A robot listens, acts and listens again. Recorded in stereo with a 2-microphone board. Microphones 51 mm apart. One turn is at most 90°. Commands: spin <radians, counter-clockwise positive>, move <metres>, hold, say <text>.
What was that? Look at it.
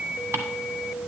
spin -1.13
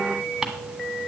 spin -0.17
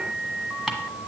say Found it: ticking, straight ahead.